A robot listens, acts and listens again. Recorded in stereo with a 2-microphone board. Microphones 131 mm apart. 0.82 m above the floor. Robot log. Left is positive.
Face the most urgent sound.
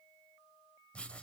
cmd idle
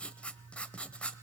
cmd idle
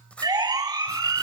note: The siren: about 25° right or 155° right.
cmd yaw -25
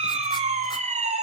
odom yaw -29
note: So it is at 125° right.
cmd yaw -125
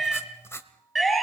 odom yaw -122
end: Facing the siren.